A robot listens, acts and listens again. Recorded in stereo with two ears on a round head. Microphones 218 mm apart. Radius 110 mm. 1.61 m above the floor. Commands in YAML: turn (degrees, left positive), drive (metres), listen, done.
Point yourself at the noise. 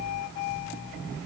listen: true
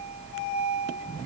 listen: true
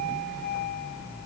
done: "I can't make out anything."